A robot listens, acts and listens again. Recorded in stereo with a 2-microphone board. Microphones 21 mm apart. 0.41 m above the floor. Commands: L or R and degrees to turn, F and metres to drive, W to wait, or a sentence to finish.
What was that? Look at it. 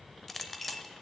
L30
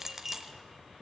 R15
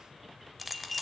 Facing the clink.